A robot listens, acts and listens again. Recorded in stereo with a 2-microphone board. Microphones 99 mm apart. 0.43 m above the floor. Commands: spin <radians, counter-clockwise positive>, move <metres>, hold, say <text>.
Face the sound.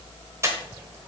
spin -0.52
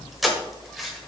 say Found it: breathing, straight ahead.